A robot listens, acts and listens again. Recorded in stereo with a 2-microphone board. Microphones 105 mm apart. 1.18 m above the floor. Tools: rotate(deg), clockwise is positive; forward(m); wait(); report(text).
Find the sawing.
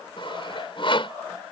rotate(-55)
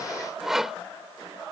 report("Found it: sawing, straight ahead.")